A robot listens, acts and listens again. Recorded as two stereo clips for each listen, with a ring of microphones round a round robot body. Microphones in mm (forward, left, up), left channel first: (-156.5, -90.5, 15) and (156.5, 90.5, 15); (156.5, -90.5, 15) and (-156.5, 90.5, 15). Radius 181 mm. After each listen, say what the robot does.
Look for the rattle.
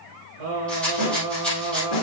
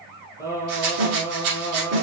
Turn 125° left.
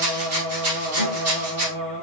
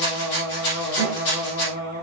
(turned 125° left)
Turn 20° right.
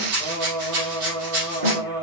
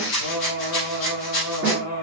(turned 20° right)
Facing the rattle.